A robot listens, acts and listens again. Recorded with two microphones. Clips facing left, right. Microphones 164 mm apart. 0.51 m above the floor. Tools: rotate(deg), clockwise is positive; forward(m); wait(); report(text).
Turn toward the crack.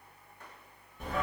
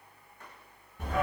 wait()
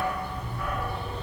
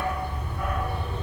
wait()
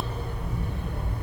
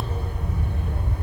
report("I can't make out a crack to turn to.")